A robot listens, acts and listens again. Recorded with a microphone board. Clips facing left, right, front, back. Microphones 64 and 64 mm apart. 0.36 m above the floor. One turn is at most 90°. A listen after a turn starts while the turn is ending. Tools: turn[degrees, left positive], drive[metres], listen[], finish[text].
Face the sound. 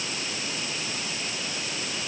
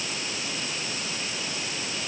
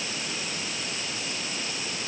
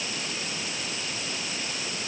Action: listen[]
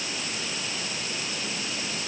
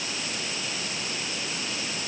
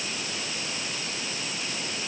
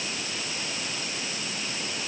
Action: listen[]
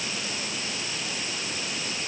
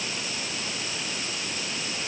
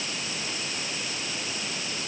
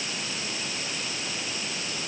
Action: finish[I can't make out anything to turn to.]